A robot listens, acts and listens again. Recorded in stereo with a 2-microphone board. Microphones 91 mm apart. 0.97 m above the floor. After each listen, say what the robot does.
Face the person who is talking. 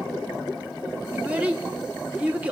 Turn 15° right.
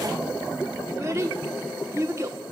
Turn 150° right.
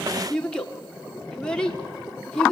Turn 10° left.
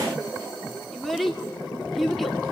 Facing the child speaking, 2 to 4 m away.